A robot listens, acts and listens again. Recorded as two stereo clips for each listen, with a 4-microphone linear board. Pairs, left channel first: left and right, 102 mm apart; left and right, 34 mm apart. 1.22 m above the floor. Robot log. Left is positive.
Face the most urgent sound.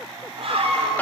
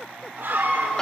note: The scream: about 65° right or 115° right.
cmd yaw -65
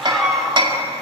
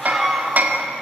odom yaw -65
end: Facing the scream, over 4 m away.